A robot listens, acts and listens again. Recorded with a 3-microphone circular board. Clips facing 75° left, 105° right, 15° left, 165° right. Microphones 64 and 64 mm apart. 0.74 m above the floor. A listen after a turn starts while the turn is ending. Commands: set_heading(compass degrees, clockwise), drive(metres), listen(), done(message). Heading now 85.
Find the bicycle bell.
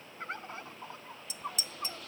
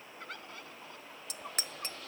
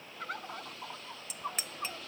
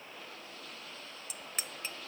set_heading(160)
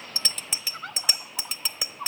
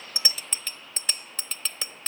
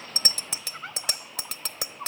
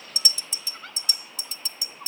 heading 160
done("Found it: a bicycle bell, straight ahead.")